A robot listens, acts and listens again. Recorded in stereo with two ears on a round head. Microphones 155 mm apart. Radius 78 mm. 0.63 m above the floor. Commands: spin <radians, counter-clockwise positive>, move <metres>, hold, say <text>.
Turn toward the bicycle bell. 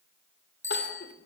spin 0.52
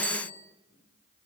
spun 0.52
hold
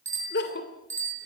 spin -0.26
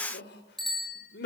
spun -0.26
say Found it: a bicycle bell, straight ahead, over 4 m away.